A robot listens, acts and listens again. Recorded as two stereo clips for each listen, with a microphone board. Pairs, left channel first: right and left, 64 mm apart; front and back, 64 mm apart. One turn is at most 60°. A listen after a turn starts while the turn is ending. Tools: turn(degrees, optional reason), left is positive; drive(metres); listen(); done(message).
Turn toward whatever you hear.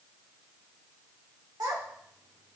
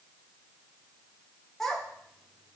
turn(degrees=60, reason="The child speaking: 80° left.")
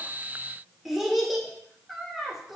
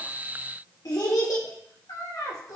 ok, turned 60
done("Found it: a child speaking, straight ahead, 2 to 4 m away.")